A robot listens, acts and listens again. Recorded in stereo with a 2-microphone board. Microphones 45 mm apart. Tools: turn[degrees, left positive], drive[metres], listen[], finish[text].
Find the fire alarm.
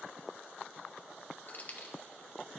Action: listen[]
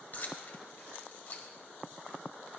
Action: listen[]
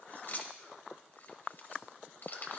Action: finish[I can't make out a fire alarm to turn to.]